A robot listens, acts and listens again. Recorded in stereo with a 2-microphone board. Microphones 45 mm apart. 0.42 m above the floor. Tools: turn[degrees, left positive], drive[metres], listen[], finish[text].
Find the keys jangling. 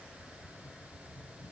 Action: listen[]
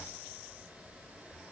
Action: listen[]
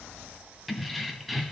Action: turn[30]
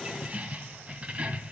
Thought: So it is at 30° right.
Action: turn[-30]
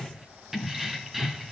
Action: finish[Found it: keys jangling, straight ahead.]